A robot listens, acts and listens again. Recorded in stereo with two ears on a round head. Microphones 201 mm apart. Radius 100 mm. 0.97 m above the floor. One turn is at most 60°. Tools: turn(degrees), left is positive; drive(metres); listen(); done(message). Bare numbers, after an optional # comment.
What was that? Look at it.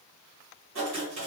# The writing: about 60° right or 120° right.
turn(-60)
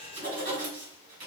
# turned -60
# So it is at 40° right.
turn(-40)
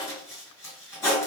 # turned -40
# The writing is now 15° left.
turn(15)
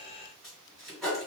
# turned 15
done("Facing the writing.")